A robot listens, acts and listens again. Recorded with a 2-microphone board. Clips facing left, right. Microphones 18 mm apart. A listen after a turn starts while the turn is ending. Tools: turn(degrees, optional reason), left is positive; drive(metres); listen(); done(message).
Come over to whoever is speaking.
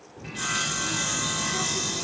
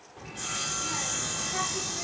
turn(degrees=-40, reason="The child speaking: about 40° right or 140° right.")
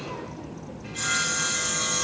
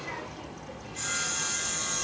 turn(degrees=-100, reason="So it is at 100° right.")
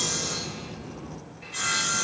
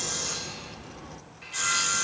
turn(degrees=-45, reason="The child speaking is now 45° right.")
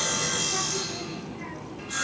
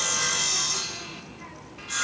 drive(metres=1.0)
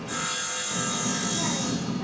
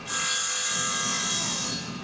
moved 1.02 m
turn(degrees=10, reason="The child speaking is now 10° left.")
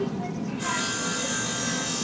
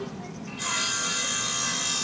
drive(metres=1.0)
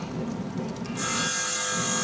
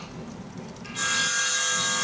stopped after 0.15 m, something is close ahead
turn(degrees=10, reason="The child speaking is now 10° left.")
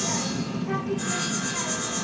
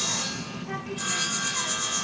done("I am next to the child speaking.")